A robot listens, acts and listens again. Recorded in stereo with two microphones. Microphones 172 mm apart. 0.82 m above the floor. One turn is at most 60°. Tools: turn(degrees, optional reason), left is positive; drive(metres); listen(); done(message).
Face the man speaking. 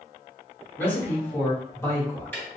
turn(degrees=20, reason="The man speaking: about 20° left or 160° left.")
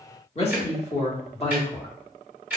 turn(degrees=35, reason="The man speaking: about 35° left or 145° left.")
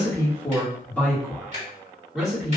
done("Facing the man speaking.")